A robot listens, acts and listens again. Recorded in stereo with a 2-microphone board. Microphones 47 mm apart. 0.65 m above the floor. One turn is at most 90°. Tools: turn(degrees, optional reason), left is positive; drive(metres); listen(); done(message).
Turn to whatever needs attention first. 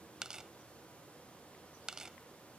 listen()
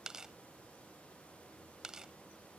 listen()
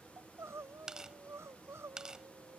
turn(degrees=-90)
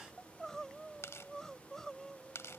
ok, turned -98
turn(degrees=10, reason="So it is at 10° left.")
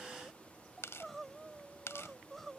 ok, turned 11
done("Found it: crying, straight ahead.")